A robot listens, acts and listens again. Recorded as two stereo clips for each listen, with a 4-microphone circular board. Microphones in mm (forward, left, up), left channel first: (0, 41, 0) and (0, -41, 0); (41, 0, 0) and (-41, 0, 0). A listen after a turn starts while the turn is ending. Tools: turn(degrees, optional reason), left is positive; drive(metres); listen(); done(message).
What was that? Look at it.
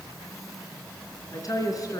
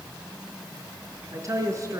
turn(degrees=130, reason="The woman speaking: 130° left.")
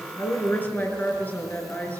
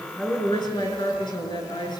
turn(degrees=20, reason="The woman speaking is now 20° left.")
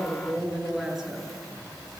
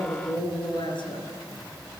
done("Found it: a woman speaking, straight ahead.")